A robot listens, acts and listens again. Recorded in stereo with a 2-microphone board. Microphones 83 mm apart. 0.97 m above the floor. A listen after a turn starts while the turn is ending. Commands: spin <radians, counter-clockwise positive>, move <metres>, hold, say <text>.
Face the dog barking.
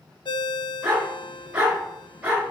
spin -0.52
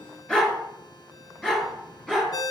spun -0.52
spin 0.17
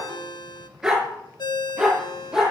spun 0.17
say Found it: a dog barking, straight ahead.